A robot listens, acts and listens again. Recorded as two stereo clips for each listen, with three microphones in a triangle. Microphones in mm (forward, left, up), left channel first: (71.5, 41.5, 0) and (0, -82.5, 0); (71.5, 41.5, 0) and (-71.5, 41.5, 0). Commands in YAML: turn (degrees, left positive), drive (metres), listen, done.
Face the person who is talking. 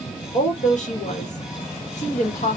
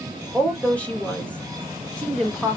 turn: 80
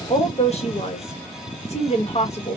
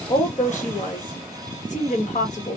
turn: 20
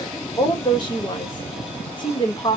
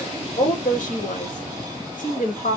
done: "Facing the woman speaking."